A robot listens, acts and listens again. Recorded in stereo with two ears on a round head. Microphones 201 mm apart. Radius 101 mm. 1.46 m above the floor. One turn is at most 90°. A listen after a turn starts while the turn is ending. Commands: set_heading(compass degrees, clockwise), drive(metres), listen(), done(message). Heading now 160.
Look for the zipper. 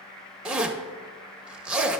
set_heading(190)
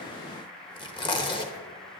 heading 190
set_heading(170)
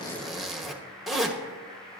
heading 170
done("Facing the zipper.")